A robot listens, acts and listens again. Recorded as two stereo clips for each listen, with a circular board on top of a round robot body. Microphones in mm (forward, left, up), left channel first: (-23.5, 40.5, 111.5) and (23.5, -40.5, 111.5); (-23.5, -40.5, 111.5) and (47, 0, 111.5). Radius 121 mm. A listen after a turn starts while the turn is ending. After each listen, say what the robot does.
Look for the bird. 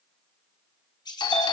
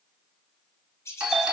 Turn 155° left.
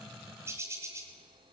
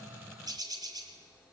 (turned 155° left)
Found it: a bird, straight ahead, 2 to 4 m away.